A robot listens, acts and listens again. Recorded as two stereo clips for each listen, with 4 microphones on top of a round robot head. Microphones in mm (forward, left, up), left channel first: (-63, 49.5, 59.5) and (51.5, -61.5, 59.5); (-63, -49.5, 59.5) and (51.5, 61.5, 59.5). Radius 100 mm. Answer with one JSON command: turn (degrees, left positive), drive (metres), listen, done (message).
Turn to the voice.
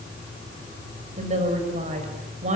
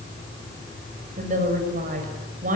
{"done": "Found it: a woman speaking, straight ahead, over 4 m away."}